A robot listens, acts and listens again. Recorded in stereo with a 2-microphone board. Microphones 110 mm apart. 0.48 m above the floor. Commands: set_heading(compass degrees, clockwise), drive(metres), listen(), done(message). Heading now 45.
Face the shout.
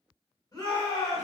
set_heading(10)
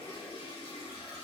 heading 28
listen()
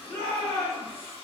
set_heading(8)
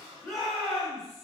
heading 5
done("Facing the shout.")